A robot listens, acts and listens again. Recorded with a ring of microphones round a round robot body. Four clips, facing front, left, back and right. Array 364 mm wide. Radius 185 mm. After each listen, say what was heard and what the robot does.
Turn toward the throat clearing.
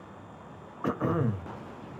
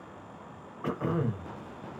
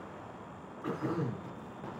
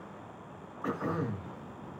The throat clearing: 15° left. Turn 15° left.
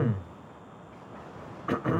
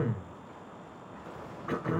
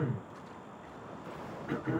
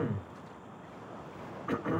Facing the throat clearing.